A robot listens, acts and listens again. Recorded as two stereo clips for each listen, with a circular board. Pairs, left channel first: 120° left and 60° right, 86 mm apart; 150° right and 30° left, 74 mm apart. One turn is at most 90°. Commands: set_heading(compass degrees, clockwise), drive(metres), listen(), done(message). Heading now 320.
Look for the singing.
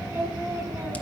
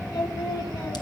set_heading(50)
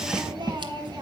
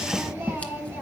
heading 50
set_heading(80)
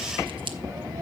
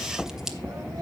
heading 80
listen()
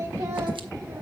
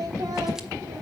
done("Found it: singing, straight ahead.")